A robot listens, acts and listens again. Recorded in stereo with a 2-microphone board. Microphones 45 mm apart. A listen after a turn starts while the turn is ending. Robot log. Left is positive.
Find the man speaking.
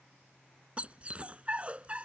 cmd idle
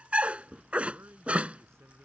note: The man speaking: about 75° right or 105° right.
cmd yaw -75
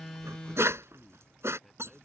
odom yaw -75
end: Found it: a man speaking, straight ahead.